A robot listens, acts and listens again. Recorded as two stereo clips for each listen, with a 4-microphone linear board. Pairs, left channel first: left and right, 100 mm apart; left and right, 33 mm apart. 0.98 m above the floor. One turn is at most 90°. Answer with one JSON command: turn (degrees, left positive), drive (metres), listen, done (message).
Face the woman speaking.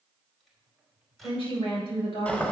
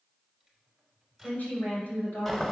{"turn": 70}
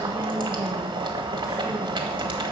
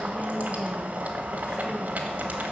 {"listen": true}
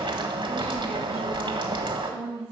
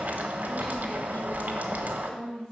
{"turn": 30}
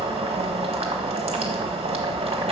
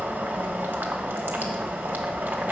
{"listen": true}
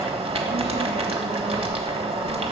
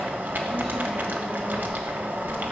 {"listen": true}
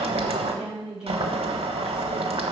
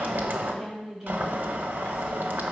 {"done": "Found it: a woman speaking, straight ahead, over 4 m away."}